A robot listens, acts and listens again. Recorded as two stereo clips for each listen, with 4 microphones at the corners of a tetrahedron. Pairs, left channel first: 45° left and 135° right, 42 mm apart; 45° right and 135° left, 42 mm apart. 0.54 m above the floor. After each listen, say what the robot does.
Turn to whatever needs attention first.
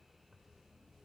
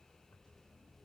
Keep listening.
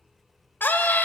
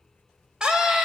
Turn 65° left.
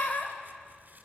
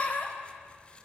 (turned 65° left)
Turn 10° left.
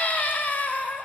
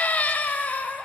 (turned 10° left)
Found it: a scream, straight ahead, 2 to 4 m away.